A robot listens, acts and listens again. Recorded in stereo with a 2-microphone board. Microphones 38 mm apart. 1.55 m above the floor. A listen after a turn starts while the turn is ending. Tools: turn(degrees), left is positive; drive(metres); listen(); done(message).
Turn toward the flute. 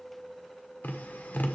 listen()
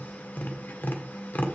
listen()
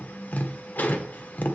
done("I can't make out a flute, only tapping.")